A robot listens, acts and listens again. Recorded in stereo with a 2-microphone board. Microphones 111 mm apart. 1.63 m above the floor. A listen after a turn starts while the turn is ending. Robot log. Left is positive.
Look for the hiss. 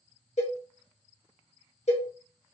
cmd idle
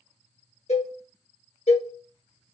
cmd idle
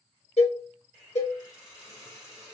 note: The hiss: about 30° left or 150° left.
cmd yaw +30
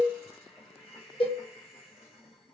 note: So it is at 120° left.
cmd yaw +120
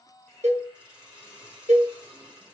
note: The hiss is now 10° right.
cmd yaw -10
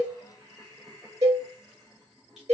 end: Facing the hiss, 2 to 4 m away.